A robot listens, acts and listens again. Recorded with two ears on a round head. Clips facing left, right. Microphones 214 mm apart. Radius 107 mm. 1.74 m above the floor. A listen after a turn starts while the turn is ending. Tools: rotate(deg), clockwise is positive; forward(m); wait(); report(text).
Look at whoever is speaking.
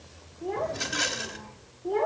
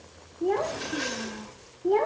rotate(55)
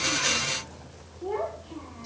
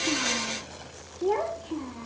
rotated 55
rotate(65)
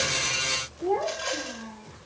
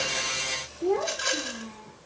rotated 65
rotate(30)
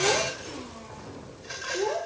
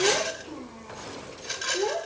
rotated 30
rotate(10)
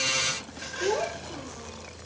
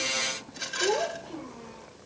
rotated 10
report("Found it: a child speaking, straight ahead.")